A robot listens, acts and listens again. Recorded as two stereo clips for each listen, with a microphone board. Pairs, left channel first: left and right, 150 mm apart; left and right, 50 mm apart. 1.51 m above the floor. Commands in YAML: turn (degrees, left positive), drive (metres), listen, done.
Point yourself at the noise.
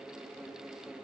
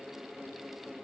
listen: true
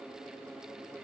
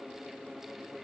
listen: true
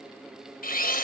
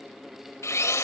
turn: 70
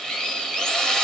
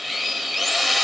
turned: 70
done: "Found it: a drill, straight ahead."